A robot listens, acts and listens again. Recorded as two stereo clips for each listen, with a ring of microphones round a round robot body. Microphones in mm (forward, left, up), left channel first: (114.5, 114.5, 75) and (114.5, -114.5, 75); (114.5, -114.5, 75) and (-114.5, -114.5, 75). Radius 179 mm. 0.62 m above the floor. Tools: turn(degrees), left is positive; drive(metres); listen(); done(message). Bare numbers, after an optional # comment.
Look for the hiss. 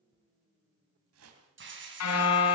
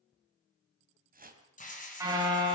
# The hiss: 55° right.
turn(-55)
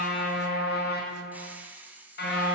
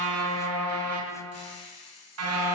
done("Found it: a hiss, straight ahead.")